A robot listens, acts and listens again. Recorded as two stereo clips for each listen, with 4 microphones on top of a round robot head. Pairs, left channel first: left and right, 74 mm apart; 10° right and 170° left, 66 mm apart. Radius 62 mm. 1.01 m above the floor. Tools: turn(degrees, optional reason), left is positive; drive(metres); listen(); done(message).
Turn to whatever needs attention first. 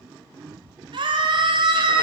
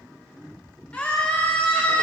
turn(degrees=-90, reason="The scream: 90° right.")
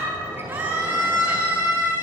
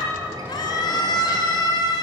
turn(degrees=-25, reason="The scream is now 25° right.")
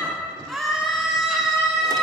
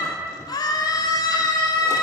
done("Found it: a scream, straight ahead.")